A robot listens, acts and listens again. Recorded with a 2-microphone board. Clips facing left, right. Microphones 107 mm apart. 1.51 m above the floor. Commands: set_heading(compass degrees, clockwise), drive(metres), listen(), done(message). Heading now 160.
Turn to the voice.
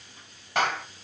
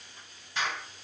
listen()
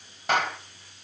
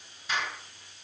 listen()
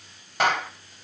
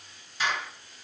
done("I can't make out anyone speaking to turn to.")